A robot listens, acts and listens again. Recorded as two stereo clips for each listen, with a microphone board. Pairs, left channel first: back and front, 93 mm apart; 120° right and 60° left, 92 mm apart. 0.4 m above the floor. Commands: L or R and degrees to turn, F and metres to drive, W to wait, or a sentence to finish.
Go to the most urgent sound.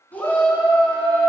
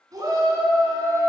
L110
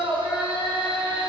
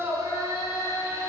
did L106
F1.0
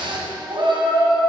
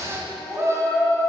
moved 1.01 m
F1.0
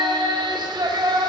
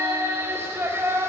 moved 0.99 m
F1.0
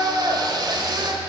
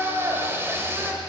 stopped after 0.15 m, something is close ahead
I am next to the shout.